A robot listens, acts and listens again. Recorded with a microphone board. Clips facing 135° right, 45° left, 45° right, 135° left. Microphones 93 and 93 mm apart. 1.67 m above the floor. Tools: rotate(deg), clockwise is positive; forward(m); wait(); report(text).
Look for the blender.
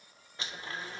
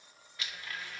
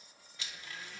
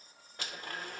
rotate(-165)
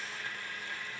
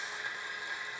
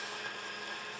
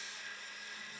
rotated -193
rotate(25)
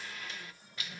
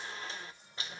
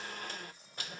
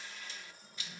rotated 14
rotate(10)
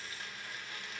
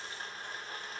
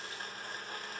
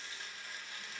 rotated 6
report("Found it: a blender, straight ahead.")